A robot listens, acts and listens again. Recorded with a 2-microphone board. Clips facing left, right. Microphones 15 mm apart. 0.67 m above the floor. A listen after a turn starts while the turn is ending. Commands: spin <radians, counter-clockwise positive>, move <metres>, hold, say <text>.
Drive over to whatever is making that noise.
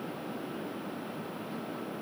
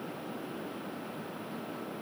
hold
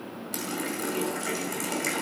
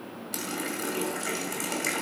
spin -0.52
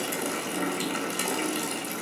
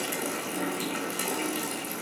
spin 0.52
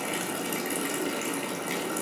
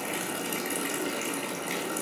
move 1.0
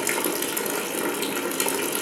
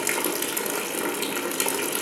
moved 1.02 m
move 1.0
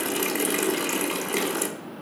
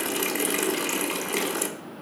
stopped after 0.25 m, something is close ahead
say Arrived at the running tap, straight ahead.